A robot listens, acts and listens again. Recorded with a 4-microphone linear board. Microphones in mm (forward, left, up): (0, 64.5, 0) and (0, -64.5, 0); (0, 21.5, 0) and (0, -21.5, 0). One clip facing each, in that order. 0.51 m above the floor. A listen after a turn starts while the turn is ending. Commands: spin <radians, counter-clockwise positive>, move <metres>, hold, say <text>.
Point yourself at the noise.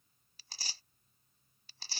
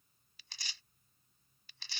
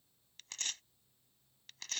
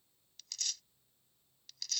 spin 0.61
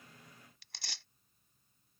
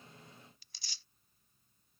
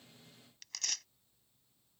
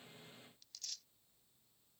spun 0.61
spin 1.83
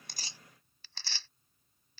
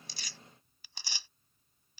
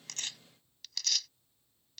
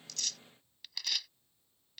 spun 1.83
spin -0.26
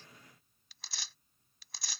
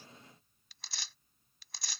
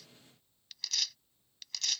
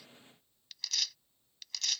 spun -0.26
say Facing the tearing paper.